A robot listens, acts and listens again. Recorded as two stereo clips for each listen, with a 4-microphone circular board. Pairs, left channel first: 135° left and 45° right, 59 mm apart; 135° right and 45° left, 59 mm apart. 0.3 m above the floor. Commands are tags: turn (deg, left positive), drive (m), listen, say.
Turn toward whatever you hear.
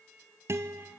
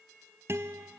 <say>Facing the guitar.</say>